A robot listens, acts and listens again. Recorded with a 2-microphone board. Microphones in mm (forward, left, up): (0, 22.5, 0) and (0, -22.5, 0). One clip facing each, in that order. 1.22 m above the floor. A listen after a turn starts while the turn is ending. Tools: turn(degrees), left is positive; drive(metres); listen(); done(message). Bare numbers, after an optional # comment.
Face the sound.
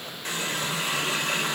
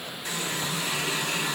# The running tap: about 50° left or 130° left.
turn(50)
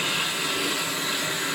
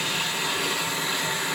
done("Found it: a running tap, straight ahead.")